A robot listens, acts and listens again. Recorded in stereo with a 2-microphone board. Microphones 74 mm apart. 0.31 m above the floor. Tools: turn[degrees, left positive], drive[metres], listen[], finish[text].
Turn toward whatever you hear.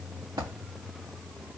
Thought: The dropped coin: about 65° right or 115° right.
Action: turn[-65]
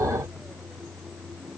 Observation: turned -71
Action: listen[]
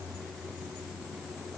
Action: finish[I heard a dropped coin, but can't make it out now. It was about 5° left or 45° right.]